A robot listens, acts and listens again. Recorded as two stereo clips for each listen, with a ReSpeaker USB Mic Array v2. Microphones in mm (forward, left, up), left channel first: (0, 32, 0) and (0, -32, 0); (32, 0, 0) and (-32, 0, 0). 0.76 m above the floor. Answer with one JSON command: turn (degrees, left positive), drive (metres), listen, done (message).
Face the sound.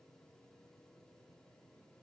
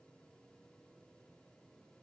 {"listen": true}
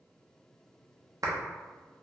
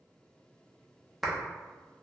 {"turn": -90}
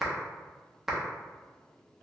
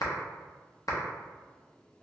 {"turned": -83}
{"done": "Found it: a clap, straight ahead."}